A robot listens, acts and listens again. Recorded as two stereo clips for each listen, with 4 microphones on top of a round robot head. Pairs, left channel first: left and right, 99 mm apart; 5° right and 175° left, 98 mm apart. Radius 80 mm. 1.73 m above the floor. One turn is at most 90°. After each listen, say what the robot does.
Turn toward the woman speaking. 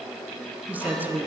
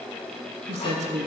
Turn 90° right.
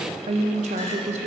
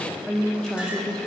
Turn 90° right.
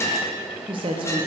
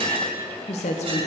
Turn 35° right.
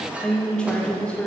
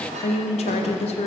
Found it: a woman speaking, straight ahead, 1 to 2 m away.